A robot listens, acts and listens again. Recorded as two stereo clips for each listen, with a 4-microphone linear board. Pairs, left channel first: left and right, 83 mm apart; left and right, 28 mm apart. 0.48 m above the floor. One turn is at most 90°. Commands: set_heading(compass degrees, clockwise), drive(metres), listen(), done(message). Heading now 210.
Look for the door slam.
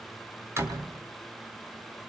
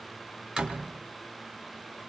set_heading(240)
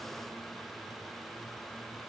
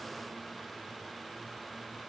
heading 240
listen()
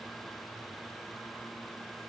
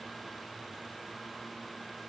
done("I heard a door slam, but can't make it out now. It was about straight ahead or 120° right.")